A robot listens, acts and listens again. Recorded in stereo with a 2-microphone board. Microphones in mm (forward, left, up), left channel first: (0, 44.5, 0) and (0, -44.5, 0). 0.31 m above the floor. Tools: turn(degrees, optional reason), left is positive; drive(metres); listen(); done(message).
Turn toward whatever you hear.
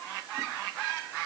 listen()
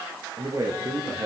turn(degrees=-40, reason="The man speaking: about 40° right or 140° right.")
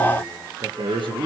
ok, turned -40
turn(degrees=-110, reason="So it is at 110° right.")
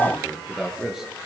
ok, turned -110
done("Facing the man speaking.")